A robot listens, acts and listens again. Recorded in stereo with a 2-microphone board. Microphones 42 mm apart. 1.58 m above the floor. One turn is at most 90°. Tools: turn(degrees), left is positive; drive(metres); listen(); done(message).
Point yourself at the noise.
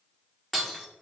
turn(degrees=30)
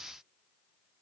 listen()
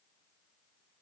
done("I heard breaking glass, but can't make it out now. It was about 25° right or 145° left.")